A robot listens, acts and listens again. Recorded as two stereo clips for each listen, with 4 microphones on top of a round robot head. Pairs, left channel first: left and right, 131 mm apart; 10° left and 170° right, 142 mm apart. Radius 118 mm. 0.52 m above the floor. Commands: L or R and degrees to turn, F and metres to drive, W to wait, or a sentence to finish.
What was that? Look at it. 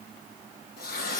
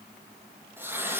L110
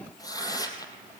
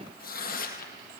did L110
L25
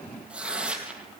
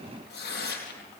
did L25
R10
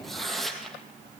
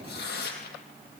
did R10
Facing the tearing paper.